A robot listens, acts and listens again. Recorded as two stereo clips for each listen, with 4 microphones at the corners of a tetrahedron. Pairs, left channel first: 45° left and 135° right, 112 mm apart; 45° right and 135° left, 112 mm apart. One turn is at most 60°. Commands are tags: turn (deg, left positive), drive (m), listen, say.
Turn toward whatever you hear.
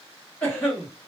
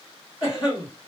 <turn deg="-25"/>
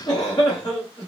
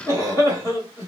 <say>Facing the cough.</say>